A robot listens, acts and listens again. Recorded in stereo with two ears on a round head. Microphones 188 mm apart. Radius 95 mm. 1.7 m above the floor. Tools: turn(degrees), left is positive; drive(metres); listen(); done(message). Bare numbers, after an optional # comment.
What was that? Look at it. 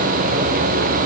listen()
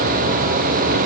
listen()
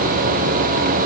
done("I can't make out anything.")